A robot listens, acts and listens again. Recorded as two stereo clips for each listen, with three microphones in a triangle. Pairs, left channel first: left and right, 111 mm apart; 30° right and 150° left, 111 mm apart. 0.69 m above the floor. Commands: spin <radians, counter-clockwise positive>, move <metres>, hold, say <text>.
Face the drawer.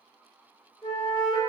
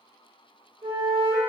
hold
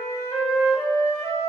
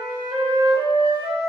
hold
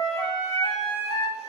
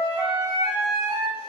say I can't make out a drawer to turn to.